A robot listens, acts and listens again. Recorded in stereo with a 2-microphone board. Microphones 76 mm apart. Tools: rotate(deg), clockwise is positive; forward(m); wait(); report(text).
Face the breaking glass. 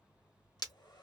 rotate(-55)
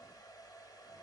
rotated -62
wait()
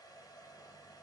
report("I heard breaking glass, but can't make it out now. It was about 10° right or 65° left.")